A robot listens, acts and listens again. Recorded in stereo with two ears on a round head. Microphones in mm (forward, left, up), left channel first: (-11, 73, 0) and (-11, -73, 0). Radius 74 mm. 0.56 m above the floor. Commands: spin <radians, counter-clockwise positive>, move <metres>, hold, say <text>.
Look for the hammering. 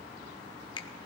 hold
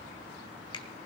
hold
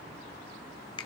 say I can't make out hammering to turn to.